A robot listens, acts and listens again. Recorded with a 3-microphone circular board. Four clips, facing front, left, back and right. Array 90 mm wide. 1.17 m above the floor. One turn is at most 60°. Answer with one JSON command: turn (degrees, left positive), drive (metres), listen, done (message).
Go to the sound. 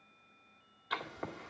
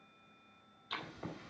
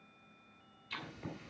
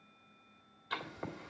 {"turn": -25}
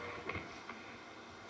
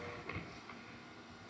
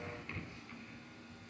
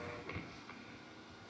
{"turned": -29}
{"drive": 1.0}
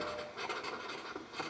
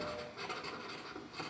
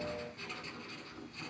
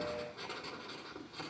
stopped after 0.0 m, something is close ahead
{"done": "Something is in my way. I am facing the writing but have not reached it."}